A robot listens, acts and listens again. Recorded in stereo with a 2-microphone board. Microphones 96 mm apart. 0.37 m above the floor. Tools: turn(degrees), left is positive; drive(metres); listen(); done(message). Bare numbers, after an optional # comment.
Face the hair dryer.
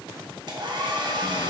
# The hair dryer: about 55° right or 125° right.
turn(-55)
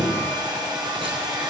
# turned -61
# So it is at 55° right.
turn(-55)
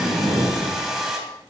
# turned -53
done("Facing the hair dryer.")